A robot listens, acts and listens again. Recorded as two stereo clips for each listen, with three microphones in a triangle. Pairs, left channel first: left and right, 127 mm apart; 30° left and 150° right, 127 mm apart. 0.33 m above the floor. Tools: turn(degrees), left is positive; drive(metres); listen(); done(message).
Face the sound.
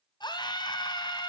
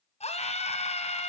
turn(degrees=40)
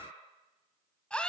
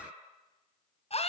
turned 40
turn(degrees=10)
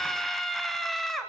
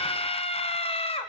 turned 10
done("Found it: a scream, straight ahead.")